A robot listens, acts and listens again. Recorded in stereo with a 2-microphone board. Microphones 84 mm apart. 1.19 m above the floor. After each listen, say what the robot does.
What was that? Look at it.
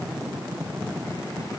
Keep listening.
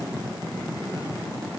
Keep listening.
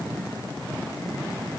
I can't make out anything.